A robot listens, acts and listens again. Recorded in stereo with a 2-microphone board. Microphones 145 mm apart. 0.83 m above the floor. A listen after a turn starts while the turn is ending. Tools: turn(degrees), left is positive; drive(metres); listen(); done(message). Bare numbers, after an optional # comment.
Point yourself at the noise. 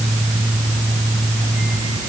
listen()
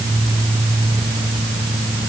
listen()
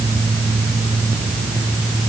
done("I can't make out anything.")